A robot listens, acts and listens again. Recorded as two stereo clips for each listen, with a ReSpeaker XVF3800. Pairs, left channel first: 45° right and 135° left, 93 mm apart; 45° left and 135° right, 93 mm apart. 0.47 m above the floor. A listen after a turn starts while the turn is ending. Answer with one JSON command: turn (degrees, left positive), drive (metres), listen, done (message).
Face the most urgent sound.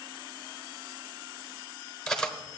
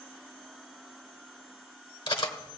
{"listen": true}
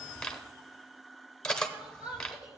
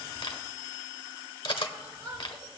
{"turn": -150}
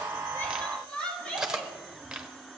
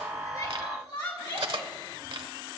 {"turn": 30}
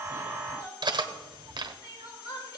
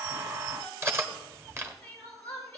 {"turn": -20}
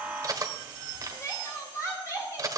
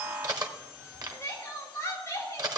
{"done": "Facing the crying."}